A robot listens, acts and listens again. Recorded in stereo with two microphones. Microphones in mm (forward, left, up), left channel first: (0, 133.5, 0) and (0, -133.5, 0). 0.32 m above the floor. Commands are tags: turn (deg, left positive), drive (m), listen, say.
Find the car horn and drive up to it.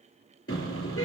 <turn deg="55"/>
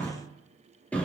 <drive m="1.0"/>
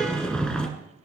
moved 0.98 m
<drive m="1.0"/>
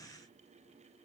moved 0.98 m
<listen/>
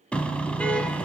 <drive m="1.0"/>
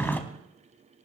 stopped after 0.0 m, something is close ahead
<turn deg="10"/>
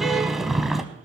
<say>Arrived at the car horn, straight ahead.</say>